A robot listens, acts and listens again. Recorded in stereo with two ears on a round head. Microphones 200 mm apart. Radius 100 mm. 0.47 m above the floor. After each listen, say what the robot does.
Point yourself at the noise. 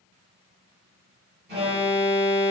Turn 45° right.
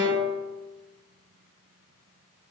Turn 90° right.
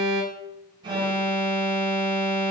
Turn 20° right.
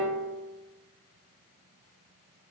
Turn 10° right.
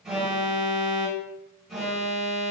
Facing the alarm.